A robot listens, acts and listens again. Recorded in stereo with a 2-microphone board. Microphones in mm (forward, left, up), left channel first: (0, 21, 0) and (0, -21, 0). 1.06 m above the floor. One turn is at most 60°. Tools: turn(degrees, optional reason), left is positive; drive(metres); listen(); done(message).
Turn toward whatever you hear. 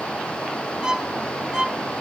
turn(degrees=-15, reason="The violin: about 15° right or 165° right.")
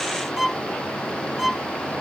done("Facing the violin.")